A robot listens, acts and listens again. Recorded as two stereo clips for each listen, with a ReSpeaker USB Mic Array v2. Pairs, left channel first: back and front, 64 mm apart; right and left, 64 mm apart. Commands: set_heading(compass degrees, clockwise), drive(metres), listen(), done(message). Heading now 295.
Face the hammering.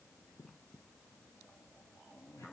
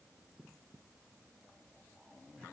listen()
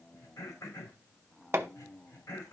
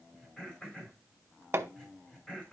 set_heading(250)
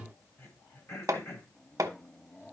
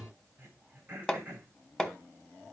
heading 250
set_heading(260)
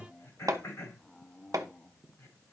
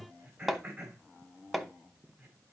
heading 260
done("Facing the hammering.")